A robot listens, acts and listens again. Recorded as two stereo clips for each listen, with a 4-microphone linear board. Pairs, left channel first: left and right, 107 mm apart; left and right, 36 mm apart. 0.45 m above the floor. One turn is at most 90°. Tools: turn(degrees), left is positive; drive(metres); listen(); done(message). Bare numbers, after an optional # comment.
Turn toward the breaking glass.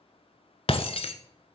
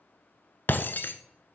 # The breaking glass: about 65° left or 115° left.
turn(65)
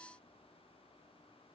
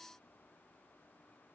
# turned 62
listen()
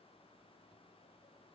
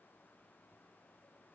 done("I heard breaking glass, but can't make it out now. It was about 5° left or 55° left.")